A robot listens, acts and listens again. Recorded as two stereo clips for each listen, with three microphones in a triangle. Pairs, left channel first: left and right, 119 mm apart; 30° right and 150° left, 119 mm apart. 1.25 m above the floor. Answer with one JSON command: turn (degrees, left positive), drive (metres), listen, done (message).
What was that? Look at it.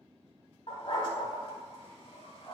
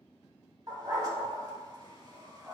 {"turn": 105}
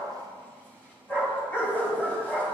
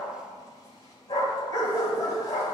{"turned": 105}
{"turn": 20}
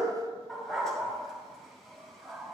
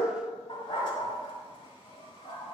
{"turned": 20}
{"done": "Facing the dog barking, 1 to 2 m away."}